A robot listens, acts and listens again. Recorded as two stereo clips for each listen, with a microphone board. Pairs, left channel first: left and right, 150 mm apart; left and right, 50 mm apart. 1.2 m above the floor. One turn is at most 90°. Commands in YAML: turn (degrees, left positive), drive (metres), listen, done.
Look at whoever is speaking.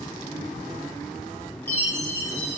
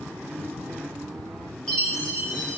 listen: true
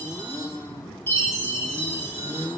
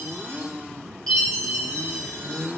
listen: true
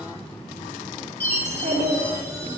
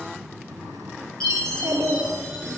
turn: -55
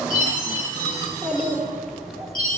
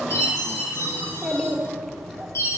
done: "Found it: a child speaking, straight ahead, 2 to 4 m away."